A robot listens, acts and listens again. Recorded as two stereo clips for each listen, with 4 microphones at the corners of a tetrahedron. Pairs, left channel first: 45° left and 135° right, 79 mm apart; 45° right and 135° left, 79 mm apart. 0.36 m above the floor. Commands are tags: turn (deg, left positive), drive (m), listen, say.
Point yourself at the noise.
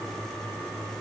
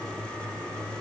<listen/>
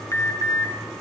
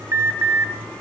<turn deg="90"/>
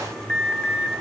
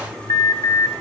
<turn deg="-25"/>
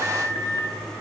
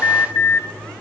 <say>Facing the alarm, 2 to 4 m away.</say>